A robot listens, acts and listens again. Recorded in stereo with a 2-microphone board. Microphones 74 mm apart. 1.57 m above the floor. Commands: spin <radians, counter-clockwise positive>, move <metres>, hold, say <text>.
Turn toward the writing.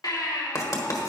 spin 0.87
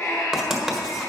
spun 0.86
say Facing the writing.